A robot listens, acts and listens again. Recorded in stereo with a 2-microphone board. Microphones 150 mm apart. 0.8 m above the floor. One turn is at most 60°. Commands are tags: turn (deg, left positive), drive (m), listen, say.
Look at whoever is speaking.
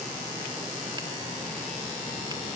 <listen/>
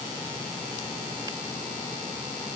<listen/>
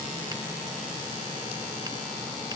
<say>I can't make out anyone speaking.</say>